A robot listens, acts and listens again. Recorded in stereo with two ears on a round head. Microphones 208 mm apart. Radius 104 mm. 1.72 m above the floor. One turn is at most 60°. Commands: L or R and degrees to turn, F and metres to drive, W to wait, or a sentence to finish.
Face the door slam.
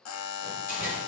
L40
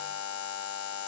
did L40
W
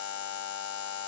I heard a door slam, but can't make it out now. It was about straight ahead or 100° left.